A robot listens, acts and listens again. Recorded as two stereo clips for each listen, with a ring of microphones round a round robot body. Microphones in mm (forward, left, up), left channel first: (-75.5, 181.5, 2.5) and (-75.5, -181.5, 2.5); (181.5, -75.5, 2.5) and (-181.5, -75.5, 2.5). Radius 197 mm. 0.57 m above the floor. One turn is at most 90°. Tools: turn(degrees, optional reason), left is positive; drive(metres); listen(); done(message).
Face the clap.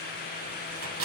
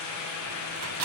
listen()
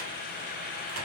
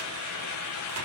listen()
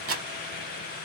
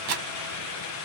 done("I can't make out a clap to turn to.")